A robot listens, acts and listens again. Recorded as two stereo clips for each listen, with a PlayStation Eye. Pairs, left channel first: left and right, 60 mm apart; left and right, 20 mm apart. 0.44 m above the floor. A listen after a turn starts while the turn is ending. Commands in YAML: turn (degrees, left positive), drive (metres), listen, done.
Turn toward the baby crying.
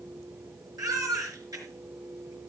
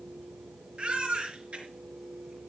turn: -90
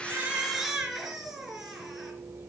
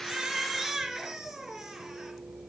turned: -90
done: "Facing the baby crying, 2 to 4 m away."